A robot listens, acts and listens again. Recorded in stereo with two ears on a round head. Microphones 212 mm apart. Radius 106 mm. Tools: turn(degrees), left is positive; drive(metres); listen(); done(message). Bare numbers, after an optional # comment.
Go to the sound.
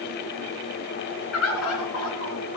# The bird: about 70° left or 110° left.
turn(70)
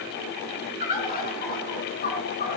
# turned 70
# So it is at 40° left.
turn(40)
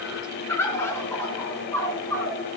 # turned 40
# The bird is now 10° left.
turn(10)
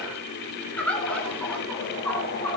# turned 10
drive(1.0)
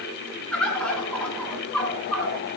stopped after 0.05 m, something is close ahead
done("Blocked. The bird is further on, straight ahead.")